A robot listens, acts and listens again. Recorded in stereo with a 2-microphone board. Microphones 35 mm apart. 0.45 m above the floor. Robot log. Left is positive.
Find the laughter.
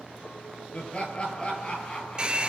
note: The laughter: about 35° left or 145° left.
cmd yaw +35
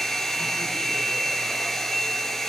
cmd idle
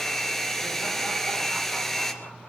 cmd idle
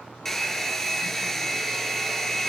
end: I heard laughter, but can't make it out now. It was about straight ahead or 110° left.